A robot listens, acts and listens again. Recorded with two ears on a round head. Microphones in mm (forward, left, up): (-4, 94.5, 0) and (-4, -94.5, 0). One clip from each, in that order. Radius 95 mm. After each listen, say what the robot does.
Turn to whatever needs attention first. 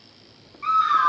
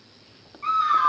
Turn 30° left.
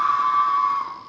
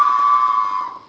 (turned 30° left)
Turn 25° right.
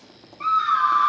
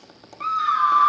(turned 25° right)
Found it: a scream, straight ahead, 1 to 2 m away.